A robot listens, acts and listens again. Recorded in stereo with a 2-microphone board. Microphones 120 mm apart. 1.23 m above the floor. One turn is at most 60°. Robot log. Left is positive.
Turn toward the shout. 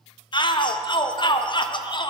note: The shout: about 40° left or 140° left.
cmd yaw +40
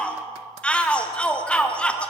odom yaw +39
note: So it is at 10° left.
cmd yaw +10
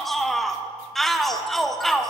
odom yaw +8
end: Found it: a shout, straight ahead.